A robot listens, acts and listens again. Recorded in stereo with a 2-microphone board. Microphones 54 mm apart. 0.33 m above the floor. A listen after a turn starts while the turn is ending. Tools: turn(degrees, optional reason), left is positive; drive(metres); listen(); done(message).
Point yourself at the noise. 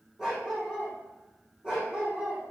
turn(degrees=-30)
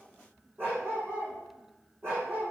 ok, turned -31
turn(degrees=-135, reason="So it is at 135° right.")
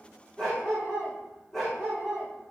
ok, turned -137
done("Found it: a dog barking, straight ahead, over 4 m away.")